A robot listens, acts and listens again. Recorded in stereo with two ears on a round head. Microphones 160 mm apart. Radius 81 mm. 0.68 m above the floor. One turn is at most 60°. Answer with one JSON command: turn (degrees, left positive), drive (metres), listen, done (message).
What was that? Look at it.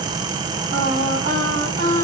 {"turn": -50}
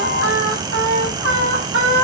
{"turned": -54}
{"turn": -60}
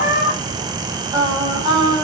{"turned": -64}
{"turn": -25}
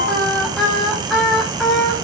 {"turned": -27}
{"done": "Facing the singing."}